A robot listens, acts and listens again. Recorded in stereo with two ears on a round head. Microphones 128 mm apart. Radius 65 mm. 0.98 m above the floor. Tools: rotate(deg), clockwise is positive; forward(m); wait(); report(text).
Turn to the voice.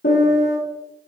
wait()
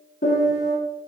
wait()
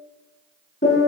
report("I can't make out anyone speaking, only a piano.")